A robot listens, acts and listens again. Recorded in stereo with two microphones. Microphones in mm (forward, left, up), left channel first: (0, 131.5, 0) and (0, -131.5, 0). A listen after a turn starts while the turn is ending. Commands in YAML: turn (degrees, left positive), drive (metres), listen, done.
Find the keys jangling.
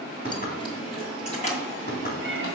turn: 30
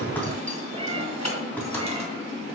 turn: 100
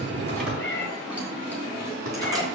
listen: true
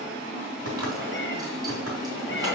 listen: true
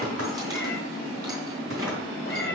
done: "I heard keys jangling from this way, but can't make it out now."